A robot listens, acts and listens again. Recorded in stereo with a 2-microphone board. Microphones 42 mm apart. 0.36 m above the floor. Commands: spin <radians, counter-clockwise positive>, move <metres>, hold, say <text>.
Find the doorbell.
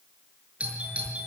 spin -0.52
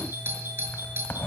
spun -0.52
spin -2.09
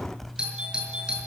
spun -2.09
spin -0.35
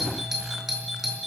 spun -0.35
say Facing the doorbell.